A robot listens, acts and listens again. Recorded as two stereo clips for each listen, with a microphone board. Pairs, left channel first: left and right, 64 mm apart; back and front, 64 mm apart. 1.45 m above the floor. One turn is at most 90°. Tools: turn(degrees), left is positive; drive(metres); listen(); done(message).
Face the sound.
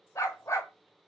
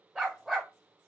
turn(degrees=80)
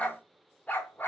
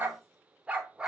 turn(degrees=65)
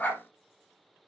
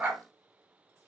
turn(degrees=55)
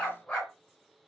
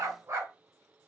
turn(degrees=30)
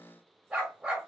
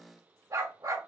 turn(degrees=-10)
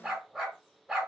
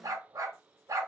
done("Found it: a dog barking, straight ahead, 2 to 4 m away.")